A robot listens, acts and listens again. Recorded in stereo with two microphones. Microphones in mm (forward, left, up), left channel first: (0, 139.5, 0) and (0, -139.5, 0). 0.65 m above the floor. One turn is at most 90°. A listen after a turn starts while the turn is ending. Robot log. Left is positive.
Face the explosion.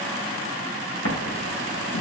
note: The explosion: about 50° left or 130° left.
cmd yaw +50
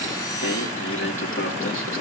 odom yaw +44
cmd idle
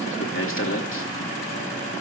end: I heard an explosion, but can't make it out now. It was about 5° left or 90° left.